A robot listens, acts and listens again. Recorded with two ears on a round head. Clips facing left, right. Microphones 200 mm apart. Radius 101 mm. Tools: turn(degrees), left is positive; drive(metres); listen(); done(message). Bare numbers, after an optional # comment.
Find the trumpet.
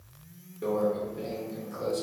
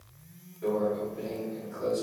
listen()
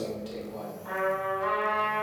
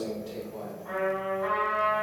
# The trumpet: about 50° left or 130° left.
turn(50)
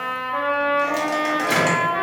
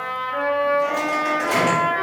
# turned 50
done("Facing the trumpet, 1 to 2 m away.")